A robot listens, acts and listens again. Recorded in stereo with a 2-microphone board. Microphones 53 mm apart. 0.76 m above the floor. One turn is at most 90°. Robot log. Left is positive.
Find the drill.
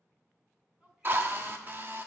note: The drill: about 40° right or 140° right.
cmd yaw -40
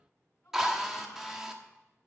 note: So it is at 10° right.
cmd yaw -10
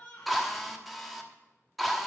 end: Found it: a drill, straight ahead, 1 to 2 m away.